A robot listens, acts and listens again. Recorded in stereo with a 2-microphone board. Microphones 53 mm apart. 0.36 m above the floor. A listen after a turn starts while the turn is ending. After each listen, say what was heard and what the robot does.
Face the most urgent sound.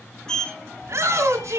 The shout: about 65° right or 115° right. Turn 65° right.
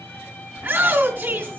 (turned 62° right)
So it is at 45° right. Turn 45° right.
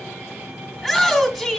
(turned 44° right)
Facing the shout.